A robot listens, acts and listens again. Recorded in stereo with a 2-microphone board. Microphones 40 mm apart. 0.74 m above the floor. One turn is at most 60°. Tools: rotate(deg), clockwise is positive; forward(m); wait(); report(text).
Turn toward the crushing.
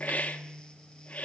wait()
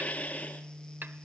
wait()
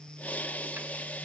report("I can't make out crushing to turn to.")